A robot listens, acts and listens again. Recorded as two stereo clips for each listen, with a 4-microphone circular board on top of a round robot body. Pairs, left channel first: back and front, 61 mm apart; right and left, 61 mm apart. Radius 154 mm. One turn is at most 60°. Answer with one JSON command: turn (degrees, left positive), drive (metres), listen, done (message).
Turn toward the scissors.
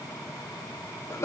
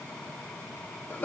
{"listen": true}
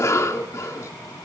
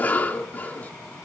{"listen": true}
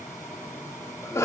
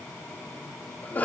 {"done": "I can't make out scissors to turn to."}